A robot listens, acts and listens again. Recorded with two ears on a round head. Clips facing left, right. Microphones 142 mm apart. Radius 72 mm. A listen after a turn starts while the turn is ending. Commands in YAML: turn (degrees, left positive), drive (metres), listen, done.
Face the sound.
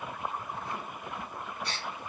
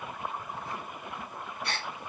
turn: -45
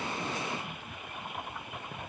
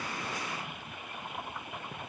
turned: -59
listen: true
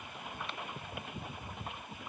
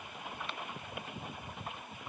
done: "I heard a gasp, but can't make it out now. It was about 15° left or 75° right."